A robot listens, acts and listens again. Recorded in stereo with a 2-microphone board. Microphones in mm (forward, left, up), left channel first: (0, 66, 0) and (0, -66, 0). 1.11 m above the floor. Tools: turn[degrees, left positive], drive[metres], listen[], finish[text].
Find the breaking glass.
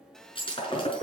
Thought: The breaking glass: about 45° left or 135° left.
Action: turn[45]
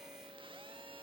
Action: listen[]
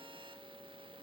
Action: finish[I heard breaking glass, but can't make it out now. It was about straight ahead or 90° left.]